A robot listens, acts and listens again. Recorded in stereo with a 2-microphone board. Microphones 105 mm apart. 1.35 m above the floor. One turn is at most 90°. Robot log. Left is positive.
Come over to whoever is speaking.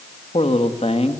cmd yaw +90
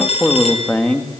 note: So it is at 15° left.
cmd yaw +15
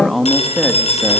cmd fwd 1.0
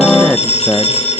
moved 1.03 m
cmd fwd 1.0
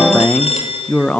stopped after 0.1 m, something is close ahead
note: The man speaking is now 10° left.
cmd yaw +10
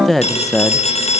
end: Arrived at the man speaking, straight ahead.